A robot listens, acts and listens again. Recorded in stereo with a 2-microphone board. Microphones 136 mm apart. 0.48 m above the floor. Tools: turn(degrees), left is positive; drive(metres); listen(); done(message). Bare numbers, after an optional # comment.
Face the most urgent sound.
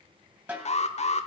# The alarm: about 60° left or 120° left.
turn(60)
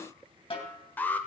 # So it is at 15° left.
turn(15)
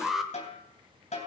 done("Found it: an alarm, straight ahead.")